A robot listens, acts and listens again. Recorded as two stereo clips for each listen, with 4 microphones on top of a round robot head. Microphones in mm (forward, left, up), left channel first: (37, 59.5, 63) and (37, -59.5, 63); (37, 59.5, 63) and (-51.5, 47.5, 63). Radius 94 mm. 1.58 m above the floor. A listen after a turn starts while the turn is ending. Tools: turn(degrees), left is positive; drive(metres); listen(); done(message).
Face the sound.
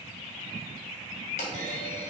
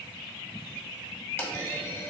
turn(degrees=70)
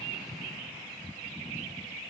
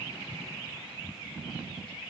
done("Facing where the clunk came from. I can't hear it now.")